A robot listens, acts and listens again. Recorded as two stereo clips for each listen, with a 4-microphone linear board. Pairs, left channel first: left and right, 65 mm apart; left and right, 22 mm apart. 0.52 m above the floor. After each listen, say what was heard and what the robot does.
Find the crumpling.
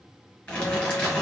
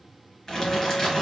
The crumpling: about 20° left or 160° left. Turn 20° left.
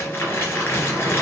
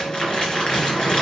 So it is at 140° left. Turn 140° left.
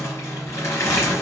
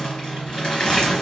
The crumpling is now 45° left. Turn 45° left.
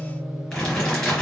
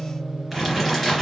Facing the crumpling, 2 to 4 m away.